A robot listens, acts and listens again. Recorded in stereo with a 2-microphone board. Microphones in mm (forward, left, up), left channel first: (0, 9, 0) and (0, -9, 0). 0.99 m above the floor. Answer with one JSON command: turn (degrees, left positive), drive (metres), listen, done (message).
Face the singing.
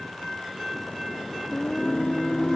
{"turn": 90}
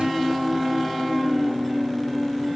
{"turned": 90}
{"done": "Facing the singing."}